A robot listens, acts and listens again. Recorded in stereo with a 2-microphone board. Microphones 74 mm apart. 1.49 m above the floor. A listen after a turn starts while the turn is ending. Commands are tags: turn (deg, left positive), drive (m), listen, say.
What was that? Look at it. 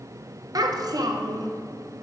<turn deg="-60"/>
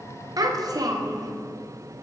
<turn deg="-60"/>
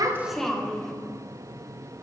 <say>Found it: a child speaking, straight ahead, 1 to 2 m away.</say>